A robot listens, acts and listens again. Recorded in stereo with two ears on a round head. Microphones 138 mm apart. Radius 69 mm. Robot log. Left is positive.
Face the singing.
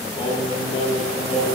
note: The singing: about 45° left or 135° left.
cmd yaw +45
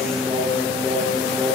note: So it is at 10° left.
cmd yaw +10
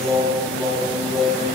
note: The singing is now 10° left.
cmd yaw +10
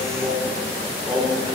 note: The singing is now 10° left.
cmd yaw +10
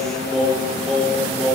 end: Found it: singing, straight ahead.